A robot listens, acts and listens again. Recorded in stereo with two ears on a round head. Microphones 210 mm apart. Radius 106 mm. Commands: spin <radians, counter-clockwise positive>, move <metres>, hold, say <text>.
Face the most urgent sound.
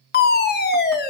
spin 0.70
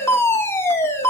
spin 0.17
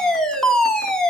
say Facing the fire alarm, 2 to 4 m away.